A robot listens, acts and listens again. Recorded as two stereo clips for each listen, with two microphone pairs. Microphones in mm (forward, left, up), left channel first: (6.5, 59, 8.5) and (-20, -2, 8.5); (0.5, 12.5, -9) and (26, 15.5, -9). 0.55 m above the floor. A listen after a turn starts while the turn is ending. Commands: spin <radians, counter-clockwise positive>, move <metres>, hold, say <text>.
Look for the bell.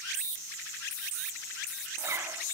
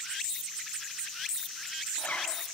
hold
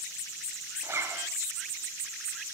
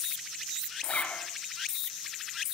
hold
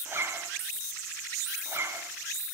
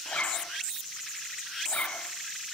say I can't make out a bell, only a zipper.